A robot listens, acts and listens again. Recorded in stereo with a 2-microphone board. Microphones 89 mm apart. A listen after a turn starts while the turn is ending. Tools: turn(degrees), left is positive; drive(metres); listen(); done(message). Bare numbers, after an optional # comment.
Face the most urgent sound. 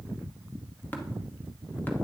listen()
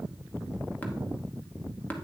listen()
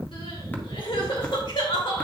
turn(90)
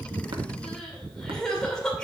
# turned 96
# So it is at 10° left.
turn(10)
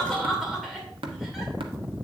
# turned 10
done("Facing the crying, 2 to 4 m away.")